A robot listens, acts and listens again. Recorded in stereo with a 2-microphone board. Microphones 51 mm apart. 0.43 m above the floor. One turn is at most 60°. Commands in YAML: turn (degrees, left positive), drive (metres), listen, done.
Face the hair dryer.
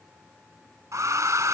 turn: -60
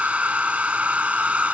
turn: -25
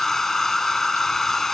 turn: 10
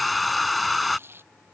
done: "Found it: a hair dryer, straight ahead."